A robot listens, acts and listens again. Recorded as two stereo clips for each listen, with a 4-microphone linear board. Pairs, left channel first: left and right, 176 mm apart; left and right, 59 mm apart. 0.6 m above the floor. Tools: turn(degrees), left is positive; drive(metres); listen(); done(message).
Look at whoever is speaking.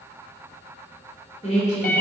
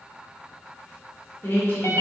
turn(degrees=40)
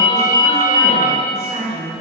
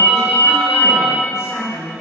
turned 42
turn(degrees=90)
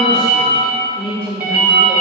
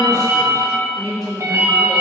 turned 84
done("Facing the woman speaking.")